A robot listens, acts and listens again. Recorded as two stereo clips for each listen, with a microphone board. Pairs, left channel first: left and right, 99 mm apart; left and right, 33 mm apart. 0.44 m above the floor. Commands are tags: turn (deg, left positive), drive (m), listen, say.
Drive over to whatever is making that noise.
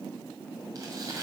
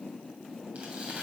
<turn deg="-40"/>
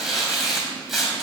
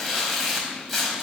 <drive m="1.0"/>
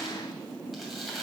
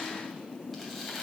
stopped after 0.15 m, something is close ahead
<say>Blocked. The tearing paper is further on, straight ahead.</say>